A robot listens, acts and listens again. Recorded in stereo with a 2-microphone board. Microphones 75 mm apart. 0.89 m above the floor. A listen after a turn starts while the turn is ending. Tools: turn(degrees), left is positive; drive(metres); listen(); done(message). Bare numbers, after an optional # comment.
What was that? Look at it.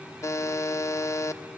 # The buzzer: about 45° left or 135° left.
turn(45)
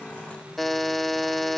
done("Facing the buzzer.")